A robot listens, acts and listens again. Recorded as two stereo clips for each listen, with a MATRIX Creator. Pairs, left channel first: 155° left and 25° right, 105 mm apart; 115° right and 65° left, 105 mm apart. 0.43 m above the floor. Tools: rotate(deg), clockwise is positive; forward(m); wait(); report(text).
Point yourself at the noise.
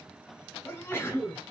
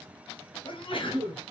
rotate(135)
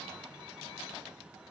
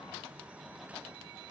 report("I heard a sneeze from this way, but can't make it out now.")